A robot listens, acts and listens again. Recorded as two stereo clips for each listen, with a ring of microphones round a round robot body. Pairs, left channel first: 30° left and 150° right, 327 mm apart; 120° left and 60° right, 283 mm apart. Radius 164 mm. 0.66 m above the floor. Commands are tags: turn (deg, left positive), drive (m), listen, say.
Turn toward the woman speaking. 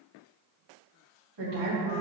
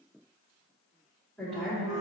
<turn deg="-150"/>
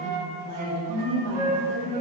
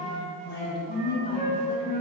<turn deg="50"/>
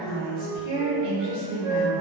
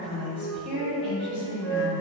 <say>Found it: a woman speaking, straight ahead.</say>